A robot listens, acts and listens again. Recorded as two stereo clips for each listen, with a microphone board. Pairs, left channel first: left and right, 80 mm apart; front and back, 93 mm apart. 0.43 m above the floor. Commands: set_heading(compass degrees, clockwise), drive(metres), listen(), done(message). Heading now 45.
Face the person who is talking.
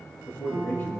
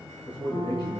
set_heading(15)
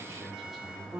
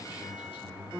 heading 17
done("Found it: a man speaking, straight ahead.")